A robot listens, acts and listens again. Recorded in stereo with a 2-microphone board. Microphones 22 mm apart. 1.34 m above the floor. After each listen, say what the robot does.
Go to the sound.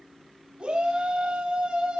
Turn 65° right.
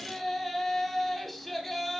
Drive 1.0 m forward.
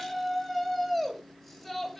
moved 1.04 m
Drive 1.0 m forward.
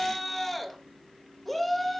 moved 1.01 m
Drive 1.0 m forward.
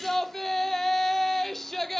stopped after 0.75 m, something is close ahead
I am next to the shout.